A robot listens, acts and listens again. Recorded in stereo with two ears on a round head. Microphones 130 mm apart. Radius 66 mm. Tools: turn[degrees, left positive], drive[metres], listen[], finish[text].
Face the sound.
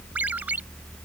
Action: turn[-30]
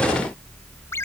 Thought: So it is at 20° left.
Action: turn[20]
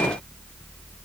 Action: listen[]
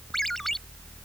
Action: finish[Found it: a ringtone, straight ahead.]